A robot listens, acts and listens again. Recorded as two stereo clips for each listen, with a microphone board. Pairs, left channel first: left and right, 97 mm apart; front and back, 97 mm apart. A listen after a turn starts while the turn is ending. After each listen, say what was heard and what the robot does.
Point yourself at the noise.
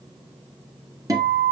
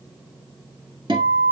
The guitar: 145° right. Turn 145° right.
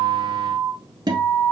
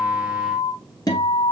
The guitar is now 45° right. Turn 45° right.
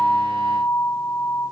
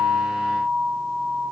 Found it: a guitar, straight ahead.